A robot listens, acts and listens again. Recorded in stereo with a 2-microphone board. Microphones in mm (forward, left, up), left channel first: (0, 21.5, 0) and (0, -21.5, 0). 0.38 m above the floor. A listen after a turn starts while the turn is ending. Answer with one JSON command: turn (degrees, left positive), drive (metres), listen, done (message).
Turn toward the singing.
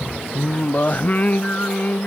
{"turn": 40}
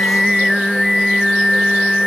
{"done": "Facing the singing."}